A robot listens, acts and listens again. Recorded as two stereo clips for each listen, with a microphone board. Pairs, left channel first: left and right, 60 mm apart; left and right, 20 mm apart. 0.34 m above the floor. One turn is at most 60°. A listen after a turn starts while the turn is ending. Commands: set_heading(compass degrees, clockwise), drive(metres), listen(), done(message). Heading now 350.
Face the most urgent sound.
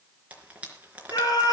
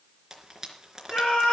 set_heading(290)
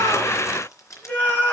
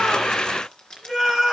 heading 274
set_heading(249)
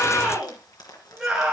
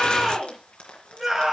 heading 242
done("Facing the scream, over 4 m away.")